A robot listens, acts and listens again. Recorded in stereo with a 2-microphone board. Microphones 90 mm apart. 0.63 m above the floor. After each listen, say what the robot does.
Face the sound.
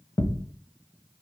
Turn 45° left.
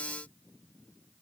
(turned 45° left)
Keep listening.
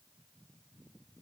I heard a thud, but can't make it out now. It was about straight ahead or 90° left.